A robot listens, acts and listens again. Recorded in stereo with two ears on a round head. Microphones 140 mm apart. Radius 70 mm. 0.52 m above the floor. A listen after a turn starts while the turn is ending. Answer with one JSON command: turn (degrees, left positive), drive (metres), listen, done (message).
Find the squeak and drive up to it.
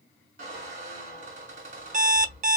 {"turn": -50}
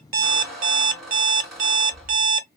{"drive": 1.0}
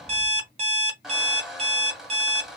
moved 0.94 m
{"drive": 1.0}
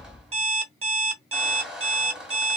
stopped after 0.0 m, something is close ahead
{"done": "Arrived at the squeak, straight ahead."}